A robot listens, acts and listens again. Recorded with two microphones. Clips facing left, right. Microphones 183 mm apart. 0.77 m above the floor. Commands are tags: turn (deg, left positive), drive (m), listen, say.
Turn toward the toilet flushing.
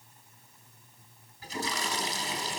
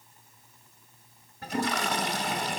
<turn deg="-60"/>
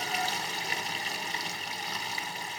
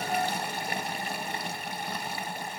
<turn deg="-55"/>
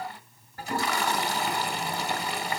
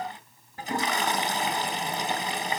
<turn deg="-20"/>
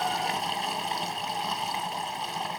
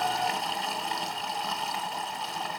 <say>Found it: a toilet flushing, straight ahead.</say>